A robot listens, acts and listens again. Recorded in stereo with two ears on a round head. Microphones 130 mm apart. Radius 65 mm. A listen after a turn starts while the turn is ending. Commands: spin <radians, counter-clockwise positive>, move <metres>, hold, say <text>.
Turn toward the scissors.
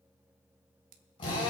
spin -1.05
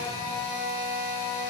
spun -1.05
hold
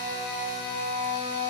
hold
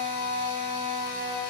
say I heard scissors, but can't make it out now. It was about straight ahead or 60° right.